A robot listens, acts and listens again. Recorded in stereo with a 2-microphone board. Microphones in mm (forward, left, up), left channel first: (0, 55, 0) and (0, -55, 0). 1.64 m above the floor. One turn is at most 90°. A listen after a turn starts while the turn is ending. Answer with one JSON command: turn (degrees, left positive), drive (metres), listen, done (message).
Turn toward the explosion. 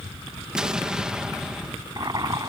{"turn": -30}
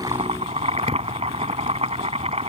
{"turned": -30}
{"listen": true}
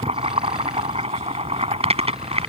{"done": "I heard an explosion, but can't make it out now. It was about 25° left or 145° right."}